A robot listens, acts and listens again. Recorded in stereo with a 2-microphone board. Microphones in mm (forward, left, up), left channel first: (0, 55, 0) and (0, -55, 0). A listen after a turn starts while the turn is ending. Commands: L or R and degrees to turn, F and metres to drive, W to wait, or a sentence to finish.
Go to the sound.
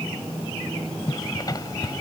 L35
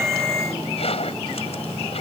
L110
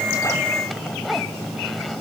F1.0
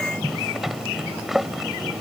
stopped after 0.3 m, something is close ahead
Something is in my way. I am facing the zipper but have not reached it.